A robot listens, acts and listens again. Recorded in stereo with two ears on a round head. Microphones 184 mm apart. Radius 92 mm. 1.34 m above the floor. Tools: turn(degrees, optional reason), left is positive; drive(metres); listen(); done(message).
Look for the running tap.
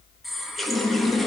turn(degrees=30)
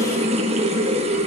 turn(degrees=-30, reason="So it is at 30° right.")
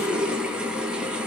done("Found it: a running tap, straight ahead, 1 to 2 m away.")